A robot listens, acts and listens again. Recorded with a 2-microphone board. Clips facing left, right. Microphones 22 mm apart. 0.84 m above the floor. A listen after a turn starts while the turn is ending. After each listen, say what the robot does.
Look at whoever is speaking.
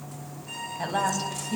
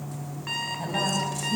Turn 30° left.
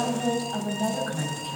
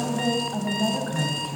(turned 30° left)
Found it: a woman speaking, straight ahead.